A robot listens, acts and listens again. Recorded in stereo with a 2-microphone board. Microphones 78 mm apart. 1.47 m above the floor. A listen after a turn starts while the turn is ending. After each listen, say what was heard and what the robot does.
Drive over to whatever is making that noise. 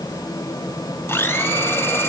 The blender: about 30° left or 150° left. Turn 30° left.
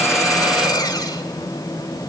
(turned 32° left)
So it is at 115° left. Turn 115° left.
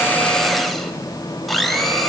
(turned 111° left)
Drive 1.0 m forward.
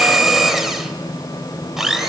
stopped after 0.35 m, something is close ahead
Blocked. The blender is further on, straight ahead.